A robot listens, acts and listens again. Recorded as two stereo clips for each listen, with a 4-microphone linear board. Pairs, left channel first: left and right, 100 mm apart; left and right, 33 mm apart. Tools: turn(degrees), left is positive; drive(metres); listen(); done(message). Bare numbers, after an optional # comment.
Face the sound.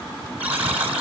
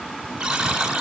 turn(-30)
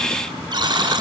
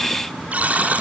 # So it is at 135° right.
turn(-135)
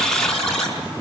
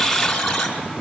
done("Found it: a buzzer, straight ahead, over 4 m away.")